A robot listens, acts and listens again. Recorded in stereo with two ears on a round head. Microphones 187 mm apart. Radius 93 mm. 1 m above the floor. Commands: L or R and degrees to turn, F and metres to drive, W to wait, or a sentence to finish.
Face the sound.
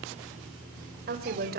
R45
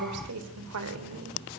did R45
R85
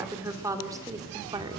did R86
R20
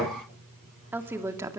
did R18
R15
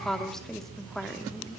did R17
Found it: a woman speaking, straight ahead, 2 to 4 m away.